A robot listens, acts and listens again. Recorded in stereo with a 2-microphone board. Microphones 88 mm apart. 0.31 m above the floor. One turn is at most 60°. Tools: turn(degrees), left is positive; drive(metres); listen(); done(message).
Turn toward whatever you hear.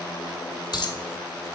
turn(degrees=55)
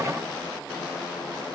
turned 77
listen()
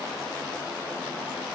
done("I heard a dropped coin, but can't make it out now. It was about 25° right or 50° left.")